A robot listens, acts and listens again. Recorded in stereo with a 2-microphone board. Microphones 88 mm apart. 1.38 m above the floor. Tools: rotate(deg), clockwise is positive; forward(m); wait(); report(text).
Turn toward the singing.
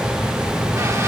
wait()
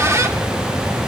wait()
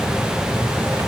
report("I can't make out singing to turn to.")